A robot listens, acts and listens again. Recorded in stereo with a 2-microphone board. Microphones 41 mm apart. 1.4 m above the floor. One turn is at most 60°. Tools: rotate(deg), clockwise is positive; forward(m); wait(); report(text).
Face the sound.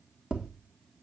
rotate(20)
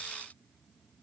wait()
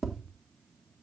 report("Found it: tapping, straight ahead.")